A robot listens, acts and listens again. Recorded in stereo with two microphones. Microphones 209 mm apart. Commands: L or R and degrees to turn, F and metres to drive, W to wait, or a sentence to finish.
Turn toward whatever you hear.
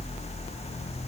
W
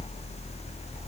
W
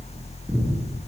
L30
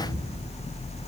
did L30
R35
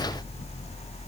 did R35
W
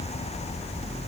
W
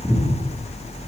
Facing the breathing, over 4 m away.